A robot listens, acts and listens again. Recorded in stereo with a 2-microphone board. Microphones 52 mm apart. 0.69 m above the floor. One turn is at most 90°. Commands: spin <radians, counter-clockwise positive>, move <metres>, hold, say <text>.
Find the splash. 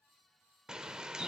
hold
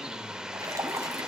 spin -1.31
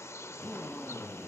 hold
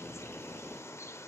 say I heard a splash, but can't make it out now. It was about straight ahead or 30° right.